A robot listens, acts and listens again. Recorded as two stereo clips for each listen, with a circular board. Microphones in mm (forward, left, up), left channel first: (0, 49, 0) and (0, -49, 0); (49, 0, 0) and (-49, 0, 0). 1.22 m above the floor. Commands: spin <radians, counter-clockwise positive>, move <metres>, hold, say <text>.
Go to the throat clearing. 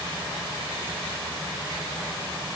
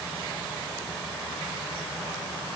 hold
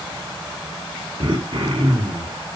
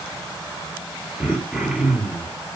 spin -1.66
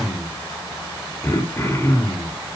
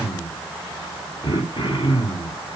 spin 0.52
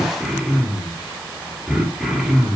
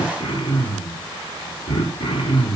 move 1.0
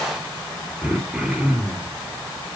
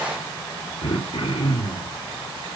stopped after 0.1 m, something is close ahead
spin -0.17
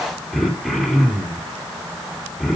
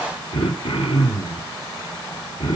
say Something is in my way. I am facing the throat clearing but have not reached it.